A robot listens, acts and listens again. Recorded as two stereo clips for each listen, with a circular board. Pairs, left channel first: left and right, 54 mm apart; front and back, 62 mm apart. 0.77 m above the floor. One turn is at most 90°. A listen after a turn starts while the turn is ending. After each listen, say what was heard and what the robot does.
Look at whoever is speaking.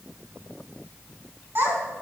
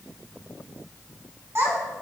The child speaking: 135° right. Turn 90° right.
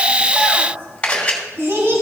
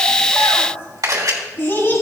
The child speaking is now 50° right. Turn 50° right.
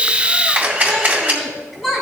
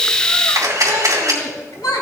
Facing the child speaking.